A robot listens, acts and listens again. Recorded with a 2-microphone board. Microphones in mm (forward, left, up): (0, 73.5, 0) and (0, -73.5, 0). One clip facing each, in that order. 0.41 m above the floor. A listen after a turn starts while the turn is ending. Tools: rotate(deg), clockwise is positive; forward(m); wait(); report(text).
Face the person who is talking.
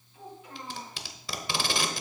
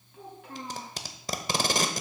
rotate(60)
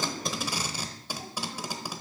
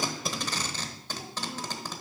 wait()
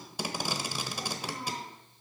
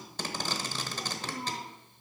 rotate(55)
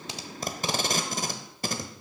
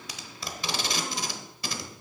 wait()
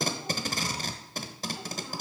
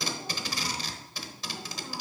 wait()
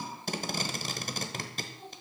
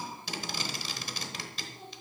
rotate(10)
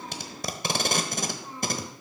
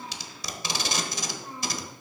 report("Facing the child speaking, over 4 m away.")